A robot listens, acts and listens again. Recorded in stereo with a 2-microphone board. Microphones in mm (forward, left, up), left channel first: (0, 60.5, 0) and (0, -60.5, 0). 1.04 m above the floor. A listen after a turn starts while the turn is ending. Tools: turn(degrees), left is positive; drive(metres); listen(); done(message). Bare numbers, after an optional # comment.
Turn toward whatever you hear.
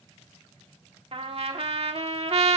# The trumpet: about 55° right or 125° right.
turn(-55)
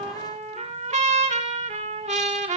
# So it is at 70° right.
turn(-70)
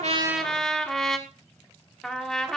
done("Facing the trumpet.")